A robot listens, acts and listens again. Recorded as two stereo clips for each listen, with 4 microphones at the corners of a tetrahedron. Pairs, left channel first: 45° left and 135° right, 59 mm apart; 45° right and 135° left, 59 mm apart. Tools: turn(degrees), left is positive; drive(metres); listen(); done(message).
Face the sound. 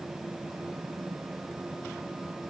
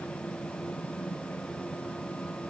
listen()
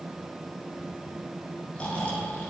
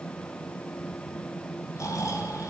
turn(degrees=-25)
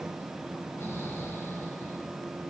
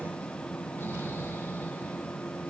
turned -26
done("Found it: snoring, straight ahead, over 4 m away.")